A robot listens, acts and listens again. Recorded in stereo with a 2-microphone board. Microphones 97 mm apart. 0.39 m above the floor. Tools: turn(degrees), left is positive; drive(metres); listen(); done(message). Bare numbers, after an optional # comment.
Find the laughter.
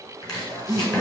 # The laughter: about 50° left or 130° left.
turn(50)
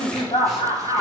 # So it is at 75° left.
turn(75)
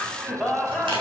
done("Found it: laughter, straight ahead, 2 to 4 m away.")